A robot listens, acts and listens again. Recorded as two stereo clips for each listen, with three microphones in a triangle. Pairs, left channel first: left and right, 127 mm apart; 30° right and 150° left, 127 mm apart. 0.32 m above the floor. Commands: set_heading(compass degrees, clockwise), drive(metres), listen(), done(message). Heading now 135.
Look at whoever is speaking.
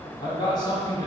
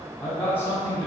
set_heading(100)
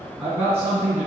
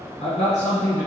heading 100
set_heading(120)
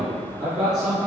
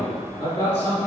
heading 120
done("Facing the man speaking, 2 to 4 m away.")